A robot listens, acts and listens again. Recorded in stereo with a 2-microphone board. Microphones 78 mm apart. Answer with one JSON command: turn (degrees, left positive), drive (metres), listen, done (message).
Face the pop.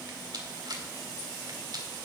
{"listen": true}
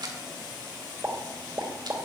{"turn": -35}
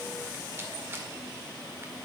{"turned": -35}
{"listen": true}
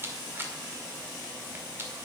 {"done": "I heard a pop, but can't make it out now. It was about straight ahead or 110° right."}